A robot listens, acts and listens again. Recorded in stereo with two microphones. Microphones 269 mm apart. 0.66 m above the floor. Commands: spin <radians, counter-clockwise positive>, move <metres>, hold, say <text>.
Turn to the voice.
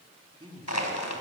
spin -0.26
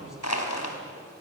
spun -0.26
hold
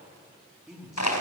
say Found it: a man speaking, straight ahead, over 4 m away.